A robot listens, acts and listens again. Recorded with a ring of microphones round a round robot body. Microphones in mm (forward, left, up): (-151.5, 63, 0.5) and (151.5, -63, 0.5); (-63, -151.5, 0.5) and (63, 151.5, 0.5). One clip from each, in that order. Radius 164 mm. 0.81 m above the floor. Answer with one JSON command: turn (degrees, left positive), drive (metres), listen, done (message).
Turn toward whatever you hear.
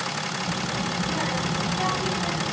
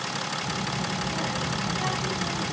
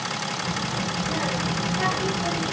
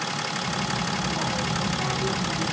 {"turn": -140}
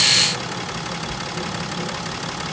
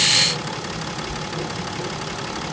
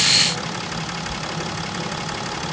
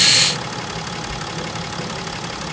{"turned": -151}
{"turn": -30}
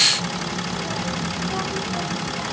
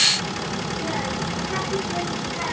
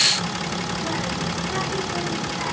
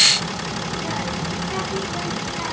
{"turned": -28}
{"turn": -25}
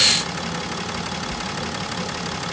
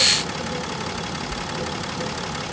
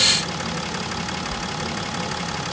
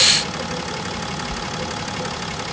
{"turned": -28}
{"done": "Found it: a child speaking, straight ahead, 1 to 2 m away."}